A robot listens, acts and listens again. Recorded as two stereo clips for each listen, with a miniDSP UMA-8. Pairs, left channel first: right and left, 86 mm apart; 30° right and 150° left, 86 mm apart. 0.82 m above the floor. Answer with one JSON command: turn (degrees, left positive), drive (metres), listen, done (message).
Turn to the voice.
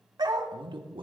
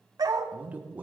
{"turn": 80}
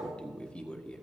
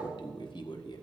{"turn": -15}
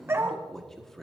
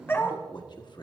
{"done": "Found it: a man speaking, straight ahead."}